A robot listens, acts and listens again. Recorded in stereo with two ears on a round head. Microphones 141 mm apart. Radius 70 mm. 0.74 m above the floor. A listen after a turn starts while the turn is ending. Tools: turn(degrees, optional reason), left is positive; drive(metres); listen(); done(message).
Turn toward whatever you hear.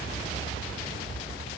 listen()
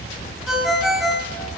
turn(degrees=30)
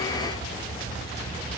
listen()
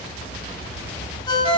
turn(degrees=150, reason="So it is at 150° left.")
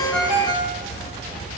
turn(degrees=-35, reason="The ringtone is now 35° right.")
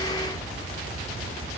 listen()
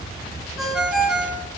done("Facing the ringtone.")